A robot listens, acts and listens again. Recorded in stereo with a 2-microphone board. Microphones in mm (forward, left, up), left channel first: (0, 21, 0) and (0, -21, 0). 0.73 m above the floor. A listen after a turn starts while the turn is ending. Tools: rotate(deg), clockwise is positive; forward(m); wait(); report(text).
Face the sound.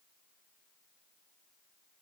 wait()
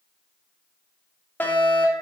rotate(-60)
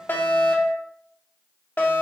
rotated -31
rotate(-65)
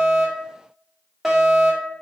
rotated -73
report("Facing the fire alarm.")